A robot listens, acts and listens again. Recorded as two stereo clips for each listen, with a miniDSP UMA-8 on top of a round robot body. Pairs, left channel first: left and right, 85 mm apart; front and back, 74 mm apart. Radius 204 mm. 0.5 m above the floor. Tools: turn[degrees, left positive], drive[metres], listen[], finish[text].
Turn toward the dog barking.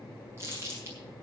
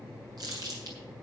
Action: listen[]
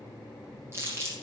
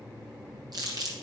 Action: listen[]
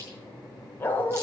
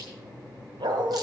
Thought: The dog barking: 160° left.
Action: turn[160]
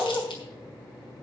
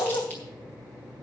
Thought: The dog barking is now 15° left.
Action: turn[15]
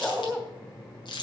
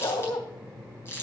Action: finish[Found it: a dog barking, straight ahead, 1 to 2 m away.]